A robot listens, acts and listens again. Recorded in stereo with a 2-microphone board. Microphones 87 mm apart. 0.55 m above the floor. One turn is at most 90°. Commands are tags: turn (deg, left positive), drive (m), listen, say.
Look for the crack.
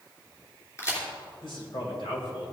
<turn deg="35"/>
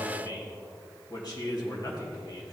<listen/>
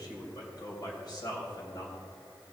<say>I heard a crack, but can't make it out now. It was about straight ahead or 110° left.</say>